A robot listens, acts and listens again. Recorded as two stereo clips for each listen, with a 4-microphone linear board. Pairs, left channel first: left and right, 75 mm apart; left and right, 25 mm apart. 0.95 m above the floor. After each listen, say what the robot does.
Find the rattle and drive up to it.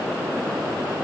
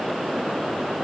Keep listening.
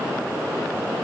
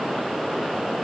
Keep listening.
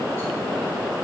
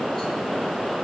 I can't make out a rattle to turn to.